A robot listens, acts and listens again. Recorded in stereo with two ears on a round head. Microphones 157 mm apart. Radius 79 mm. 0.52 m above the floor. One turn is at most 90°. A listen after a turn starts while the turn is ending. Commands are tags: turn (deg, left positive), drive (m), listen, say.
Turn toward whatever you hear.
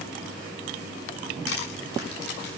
<turn deg="70"/>
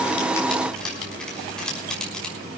<say>Facing the crushing.</say>